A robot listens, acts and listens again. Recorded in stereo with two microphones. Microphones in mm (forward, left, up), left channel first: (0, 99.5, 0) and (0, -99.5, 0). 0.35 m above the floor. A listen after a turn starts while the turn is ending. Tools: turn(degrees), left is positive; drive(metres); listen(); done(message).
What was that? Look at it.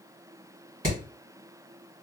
turn(degrees=-45)
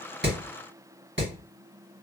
turn(degrees=-90)
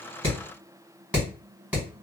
done("Facing the hammering, 1 to 2 m away.")